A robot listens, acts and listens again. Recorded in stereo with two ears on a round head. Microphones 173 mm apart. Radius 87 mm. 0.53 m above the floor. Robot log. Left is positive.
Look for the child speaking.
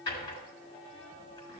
cmd idle
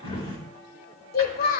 note: The child speaking: about 50° left or 130° left.
cmd yaw +50
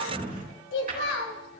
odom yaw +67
note: So it is at 75° left.
cmd yaw +75
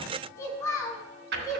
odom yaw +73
note: The child speaking is now 15° left.
cmd yaw +15
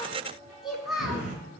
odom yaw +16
end: Facing the child speaking, 2 to 4 m away.